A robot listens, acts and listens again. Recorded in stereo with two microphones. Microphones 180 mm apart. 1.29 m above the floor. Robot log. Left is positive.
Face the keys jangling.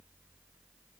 cmd idle
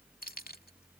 note: The keys jangling: about 55° left or 125° left.
cmd yaw +55
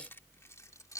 note: So it is at 20° left.
cmd yaw +20
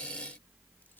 cmd idle
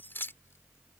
note: The keys jangling is now 10° left.
cmd yaw +10
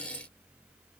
cmd idle
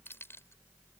cmd idle
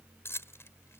note: The keys jangling is now 15° left.
cmd yaw +15
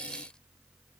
cmd idle
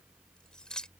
end: Found it: keys jangling, straight ahead.